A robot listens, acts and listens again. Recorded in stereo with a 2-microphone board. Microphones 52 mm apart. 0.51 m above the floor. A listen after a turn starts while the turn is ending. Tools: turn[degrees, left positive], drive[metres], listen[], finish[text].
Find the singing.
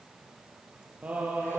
Thought: The singing: about 30° right or 150° right.
Action: turn[-30]
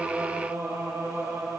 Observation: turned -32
Thought: So it is at 115° right.
Action: turn[-115]
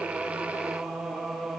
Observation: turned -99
Action: finish[Found it: singing, straight ahead.]